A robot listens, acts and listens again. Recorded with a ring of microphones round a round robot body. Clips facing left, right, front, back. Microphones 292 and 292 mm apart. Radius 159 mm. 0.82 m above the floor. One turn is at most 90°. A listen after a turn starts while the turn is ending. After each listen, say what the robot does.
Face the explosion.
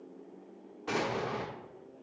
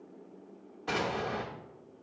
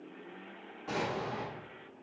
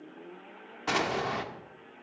Turn 90° left.
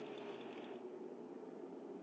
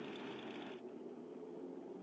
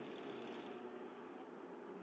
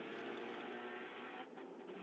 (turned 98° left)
Turn 80° left.
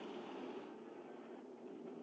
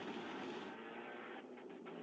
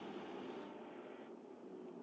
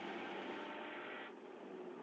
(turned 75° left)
I heard an explosion from this way, but can't make it out now.